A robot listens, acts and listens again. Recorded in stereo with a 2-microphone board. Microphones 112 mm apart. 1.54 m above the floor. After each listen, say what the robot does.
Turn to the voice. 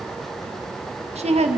Turn 90° right.
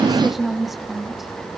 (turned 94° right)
Found it: a woman speaking, straight ahead, 2 to 4 m away.